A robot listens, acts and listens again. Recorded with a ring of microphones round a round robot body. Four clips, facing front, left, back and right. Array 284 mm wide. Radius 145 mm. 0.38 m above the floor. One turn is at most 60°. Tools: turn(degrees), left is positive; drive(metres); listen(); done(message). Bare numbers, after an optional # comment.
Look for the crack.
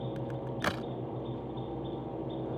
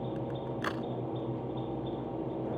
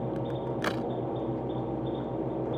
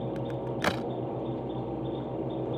# The crack: 90° right.
turn(-60)
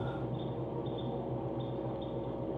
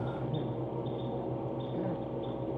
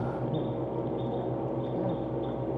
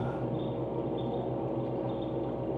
# Nothing new. It was at 30° right.
turn(-30)
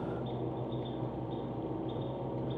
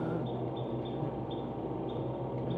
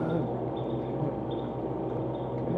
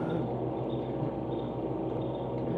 done("I heard a crack from this way, but can't make it out now.")